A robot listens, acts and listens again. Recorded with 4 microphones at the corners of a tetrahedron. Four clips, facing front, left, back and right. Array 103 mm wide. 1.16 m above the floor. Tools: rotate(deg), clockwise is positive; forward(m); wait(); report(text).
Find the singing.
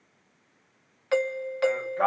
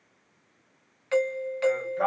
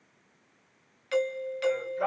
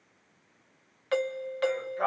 report("Found it: singing, straight ahead.")